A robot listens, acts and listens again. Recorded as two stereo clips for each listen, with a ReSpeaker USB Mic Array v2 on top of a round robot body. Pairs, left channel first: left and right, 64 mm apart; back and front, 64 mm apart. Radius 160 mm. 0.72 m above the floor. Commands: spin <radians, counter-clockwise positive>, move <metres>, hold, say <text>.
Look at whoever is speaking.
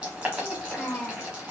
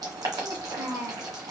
spin 0.35
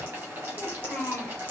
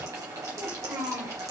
say Facing the child speaking.